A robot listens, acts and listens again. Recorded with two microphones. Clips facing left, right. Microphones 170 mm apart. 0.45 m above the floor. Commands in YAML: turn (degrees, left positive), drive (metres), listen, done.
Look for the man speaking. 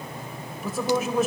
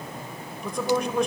turn: 30
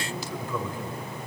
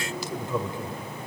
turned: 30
turn: -25
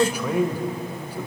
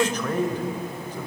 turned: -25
turn: 10
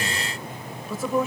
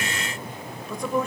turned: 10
done: "Found it: a man speaking, straight ahead."